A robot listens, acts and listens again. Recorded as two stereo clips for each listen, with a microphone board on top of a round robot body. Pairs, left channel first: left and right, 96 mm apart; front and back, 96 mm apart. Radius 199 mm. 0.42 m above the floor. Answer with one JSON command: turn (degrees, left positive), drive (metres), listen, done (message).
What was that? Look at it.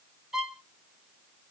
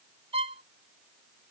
{"turn": -175}
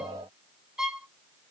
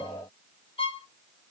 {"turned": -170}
{"done": "Facing the violin."}